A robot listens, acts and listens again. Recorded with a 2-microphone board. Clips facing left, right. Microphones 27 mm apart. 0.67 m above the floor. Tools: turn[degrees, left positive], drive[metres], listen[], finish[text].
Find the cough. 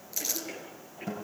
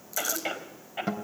Thought: The cough: about 75° right or 105° right.
Action: turn[-75]
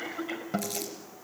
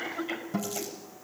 Action: finish[Found it: a cough, straight ahead, over 4 m away.]